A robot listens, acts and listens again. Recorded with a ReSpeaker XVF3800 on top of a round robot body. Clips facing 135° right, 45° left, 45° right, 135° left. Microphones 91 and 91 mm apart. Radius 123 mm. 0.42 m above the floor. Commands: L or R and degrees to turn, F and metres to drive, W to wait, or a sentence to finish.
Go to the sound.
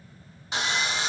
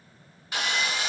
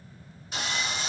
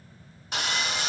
L160
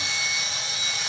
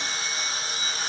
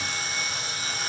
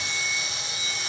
F1.0
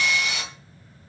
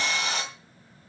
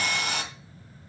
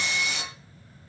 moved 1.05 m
R10
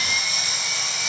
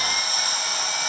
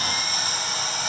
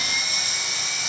F1.0
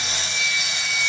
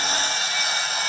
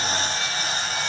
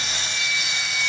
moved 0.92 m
F1.0
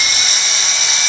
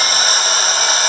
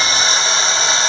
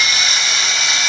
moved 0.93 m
L10
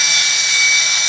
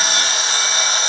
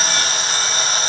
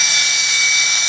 F1.0
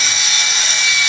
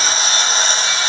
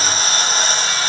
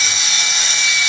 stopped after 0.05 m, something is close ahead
Arrived at the sawing, straight ahead.